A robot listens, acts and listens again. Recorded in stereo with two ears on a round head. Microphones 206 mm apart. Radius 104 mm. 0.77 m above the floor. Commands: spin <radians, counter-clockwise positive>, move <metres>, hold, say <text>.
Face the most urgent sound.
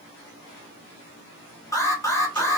spin 0.26
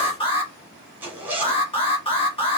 spin 2.71
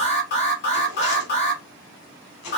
spin 0.87
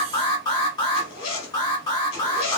spin 0.35
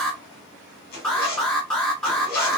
say Found it: an alarm, straight ahead.